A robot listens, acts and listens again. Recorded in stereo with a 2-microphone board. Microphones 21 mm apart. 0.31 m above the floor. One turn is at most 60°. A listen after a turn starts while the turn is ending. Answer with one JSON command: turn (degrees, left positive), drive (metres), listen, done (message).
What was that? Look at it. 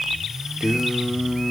{"turn": -40}
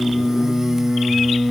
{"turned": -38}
{"turn": -25}
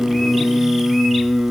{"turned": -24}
{"turn": -30}
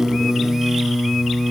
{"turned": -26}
{"turn": -25}
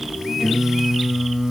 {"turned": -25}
{"turn": -10}
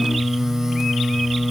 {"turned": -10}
{"done": "Facing the singing, 1 to 2 m away."}